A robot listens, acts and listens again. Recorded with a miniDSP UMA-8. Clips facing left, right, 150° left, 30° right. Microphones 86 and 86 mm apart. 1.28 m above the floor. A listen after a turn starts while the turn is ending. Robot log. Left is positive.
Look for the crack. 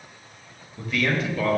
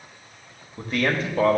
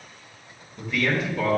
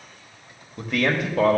cmd idle
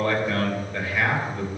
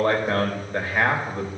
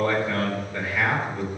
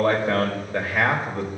cmd idle
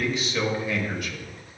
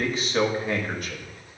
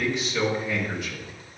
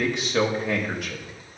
end: I can't make out a crack to turn to.